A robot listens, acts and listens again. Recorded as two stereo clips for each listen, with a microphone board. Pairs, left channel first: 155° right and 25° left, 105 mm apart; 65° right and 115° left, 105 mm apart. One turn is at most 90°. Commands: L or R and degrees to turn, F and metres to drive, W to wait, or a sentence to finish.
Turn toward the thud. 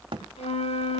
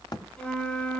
R15
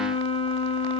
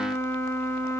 Facing where the thud came from. I can't hear it now.